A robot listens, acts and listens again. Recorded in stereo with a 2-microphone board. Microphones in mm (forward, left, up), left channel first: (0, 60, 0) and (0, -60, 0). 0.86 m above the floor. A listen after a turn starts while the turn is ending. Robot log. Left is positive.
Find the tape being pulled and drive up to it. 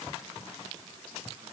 cmd idle
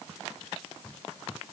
cmd idle
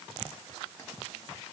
end: I can't make out tape being pulled to turn to.